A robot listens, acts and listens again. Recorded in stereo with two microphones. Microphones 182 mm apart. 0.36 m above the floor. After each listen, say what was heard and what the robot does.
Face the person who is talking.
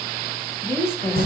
Turn 30° left.
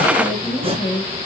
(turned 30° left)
So it is at 135° left. Turn 135° left.
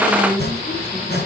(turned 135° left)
The woman speaking is now 15° left. Turn 15° left.
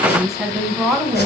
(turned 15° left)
Facing the woman speaking, 2 to 4 m away.